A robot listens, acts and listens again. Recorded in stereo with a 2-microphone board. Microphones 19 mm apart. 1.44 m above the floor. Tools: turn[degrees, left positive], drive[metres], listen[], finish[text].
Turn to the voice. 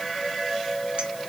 Action: listen[]
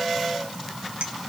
Action: listen[]
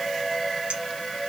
Action: finish[I can't make out anyone speaking to turn to.]